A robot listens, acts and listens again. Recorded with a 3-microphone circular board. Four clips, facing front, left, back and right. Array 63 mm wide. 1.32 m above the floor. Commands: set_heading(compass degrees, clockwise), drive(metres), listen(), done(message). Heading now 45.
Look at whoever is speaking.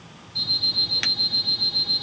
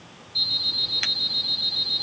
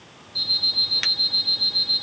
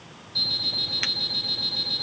listen()
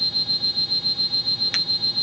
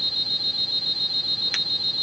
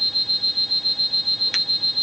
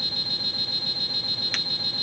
listen()
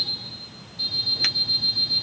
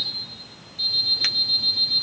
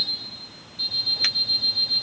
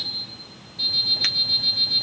done("I can't make out anyone speaking, only an alarm clock.")